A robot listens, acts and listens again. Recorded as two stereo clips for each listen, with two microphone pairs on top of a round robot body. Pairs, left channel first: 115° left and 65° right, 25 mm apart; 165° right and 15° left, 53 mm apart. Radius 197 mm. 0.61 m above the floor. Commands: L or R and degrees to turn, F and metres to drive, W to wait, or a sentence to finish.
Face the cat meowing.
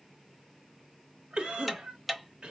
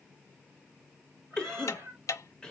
R25
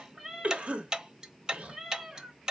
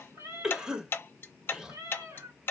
Facing the cat meowing, 2 to 4 m away.